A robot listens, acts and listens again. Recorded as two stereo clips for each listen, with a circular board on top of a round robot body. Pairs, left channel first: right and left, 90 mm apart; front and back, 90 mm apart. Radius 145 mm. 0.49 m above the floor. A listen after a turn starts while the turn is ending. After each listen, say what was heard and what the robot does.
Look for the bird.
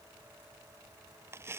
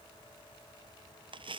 Keep listening.
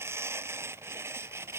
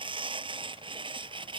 Keep listening.
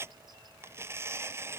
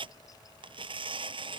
I can't make out a bird, only tearing paper.